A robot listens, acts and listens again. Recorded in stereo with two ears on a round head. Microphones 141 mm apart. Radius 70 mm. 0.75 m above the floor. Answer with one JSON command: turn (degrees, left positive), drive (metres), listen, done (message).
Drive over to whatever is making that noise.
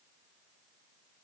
{"listen": true}
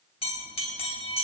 {"turn": 40}
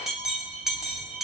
{"drive": 1.0}
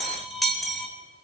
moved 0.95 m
{"drive": 1.0}
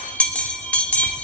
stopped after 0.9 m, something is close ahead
{"turn": 10}
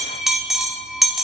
{"done": "I am next to the bell."}